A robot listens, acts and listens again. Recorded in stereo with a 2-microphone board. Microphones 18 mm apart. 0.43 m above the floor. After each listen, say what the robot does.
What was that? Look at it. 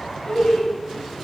Turn 50° left.
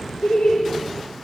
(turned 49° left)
Turn 55° left.
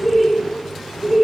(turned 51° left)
Found it: laughter, straight ahead, 1 to 2 m away.